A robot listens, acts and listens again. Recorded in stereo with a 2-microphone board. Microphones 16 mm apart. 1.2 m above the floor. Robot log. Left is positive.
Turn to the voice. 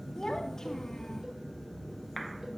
note: The child speaking: about 30° left or 150° left.
cmd yaw +30
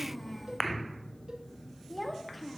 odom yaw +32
end: Facing the child speaking, 2 to 4 m away.